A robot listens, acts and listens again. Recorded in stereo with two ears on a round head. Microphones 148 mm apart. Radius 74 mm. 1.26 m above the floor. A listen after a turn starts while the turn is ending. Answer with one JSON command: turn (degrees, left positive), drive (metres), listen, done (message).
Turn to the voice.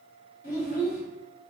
{"turn": 55}
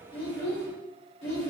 {"turn": 70}
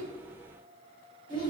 {"turn": 25}
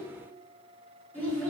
{"turn": 10}
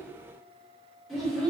{"done": "Found it: a child speaking, straight ahead."}